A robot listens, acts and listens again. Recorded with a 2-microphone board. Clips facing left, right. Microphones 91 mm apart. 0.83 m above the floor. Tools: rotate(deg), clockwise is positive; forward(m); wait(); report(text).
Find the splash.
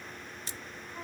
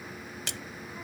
rotate(90)
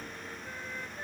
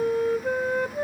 report("I heard a splash from this way, but can't make it out now.")